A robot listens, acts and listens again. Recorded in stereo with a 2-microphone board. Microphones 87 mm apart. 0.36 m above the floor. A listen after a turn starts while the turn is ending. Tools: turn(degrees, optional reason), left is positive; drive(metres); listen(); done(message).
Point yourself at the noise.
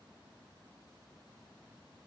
listen()
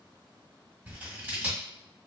turn(degrees=-15, reason="The scissors: about 15° right or 165° right.")
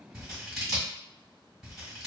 done("Facing the scissors.")